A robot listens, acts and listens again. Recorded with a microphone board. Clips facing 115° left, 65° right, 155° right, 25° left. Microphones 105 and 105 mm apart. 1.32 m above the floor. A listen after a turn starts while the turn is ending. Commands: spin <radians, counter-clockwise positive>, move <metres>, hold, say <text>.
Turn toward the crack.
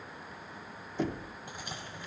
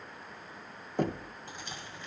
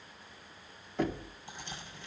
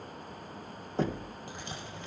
spin 0.61
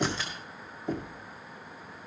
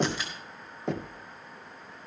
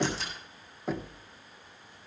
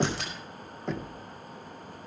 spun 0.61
say Facing where the crack came from. I can't hear it now.